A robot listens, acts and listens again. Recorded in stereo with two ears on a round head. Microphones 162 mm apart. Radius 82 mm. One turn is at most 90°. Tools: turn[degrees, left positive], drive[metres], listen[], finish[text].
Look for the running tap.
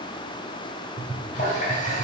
Thought: The running tap: about 45° left or 135° left.
Action: turn[45]
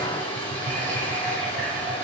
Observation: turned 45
Thought: So it is at 10° left.
Action: turn[10]
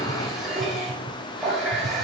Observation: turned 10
Action: finish[Facing the running tap.]